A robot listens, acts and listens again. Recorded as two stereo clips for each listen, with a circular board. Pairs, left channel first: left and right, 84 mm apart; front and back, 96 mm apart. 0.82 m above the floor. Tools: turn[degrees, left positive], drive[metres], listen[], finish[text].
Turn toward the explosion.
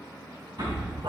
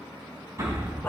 Thought: The explosion: 120° right.
Action: turn[-120]
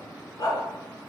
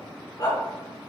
Action: finish[Facing where the explosion came from. I can't hear it now.]